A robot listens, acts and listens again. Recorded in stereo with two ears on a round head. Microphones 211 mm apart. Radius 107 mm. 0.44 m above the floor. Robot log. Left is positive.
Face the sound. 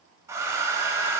cmd yaw -30
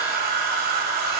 note: So it is at 135° right.
cmd yaw -135
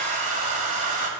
note: The hair dryer is now 35° right.
cmd yaw -35
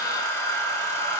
note: The hair dryer is now 15° left.
cmd yaw +15
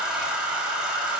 end: Found it: a hair dryer, straight ahead, 1 to 2 m away.